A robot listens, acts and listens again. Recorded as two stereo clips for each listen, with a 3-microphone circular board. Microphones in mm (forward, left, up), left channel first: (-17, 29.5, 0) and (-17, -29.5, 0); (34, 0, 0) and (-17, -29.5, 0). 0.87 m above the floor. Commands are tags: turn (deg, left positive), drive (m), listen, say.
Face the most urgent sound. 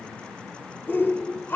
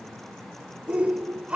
<turn deg="140"/>
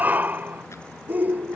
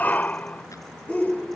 <turn deg="-30"/>
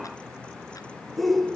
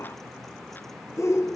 <say>Found it: a shout, straight ahead.</say>